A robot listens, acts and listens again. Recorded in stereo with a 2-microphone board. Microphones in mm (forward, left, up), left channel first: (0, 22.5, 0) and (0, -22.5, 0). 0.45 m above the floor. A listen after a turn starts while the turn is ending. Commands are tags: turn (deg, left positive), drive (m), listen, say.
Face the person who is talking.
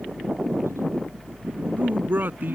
<turn deg="-45"/>
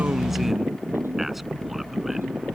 <listen/>
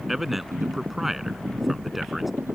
<say>Facing the man speaking.</say>